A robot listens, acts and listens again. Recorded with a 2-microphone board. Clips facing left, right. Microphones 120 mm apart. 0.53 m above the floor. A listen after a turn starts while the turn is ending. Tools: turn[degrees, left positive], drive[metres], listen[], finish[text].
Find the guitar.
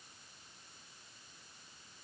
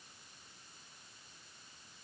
Action: listen[]
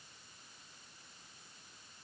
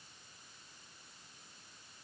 Action: listen[]
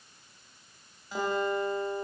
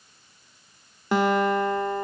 Action: turn[-90]
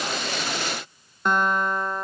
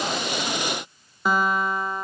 Action: finish[Found it: a guitar, straight ahead.]